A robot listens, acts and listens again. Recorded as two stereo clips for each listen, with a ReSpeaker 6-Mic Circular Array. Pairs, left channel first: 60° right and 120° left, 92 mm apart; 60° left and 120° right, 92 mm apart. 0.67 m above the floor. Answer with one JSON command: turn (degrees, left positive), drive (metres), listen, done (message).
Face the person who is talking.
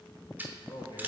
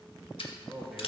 {"turn": -30}
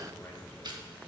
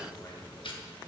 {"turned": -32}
{"listen": true}
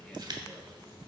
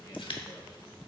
{"listen": true}
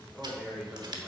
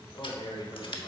{"turn": 40}
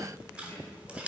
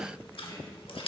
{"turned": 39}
{"listen": true}
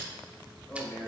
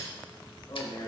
{"turn": 20}
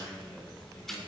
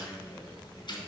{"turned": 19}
{"done": "Found it: a man speaking, straight ahead, 2 to 4 m away."}